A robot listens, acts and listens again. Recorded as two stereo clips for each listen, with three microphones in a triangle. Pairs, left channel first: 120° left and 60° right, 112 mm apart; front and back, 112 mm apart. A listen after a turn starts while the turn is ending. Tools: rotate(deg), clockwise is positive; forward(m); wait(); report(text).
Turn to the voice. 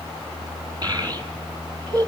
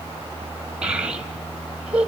rotate(100)
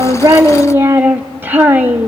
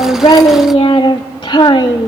report("Facing the child speaking, 1 to 2 m away.")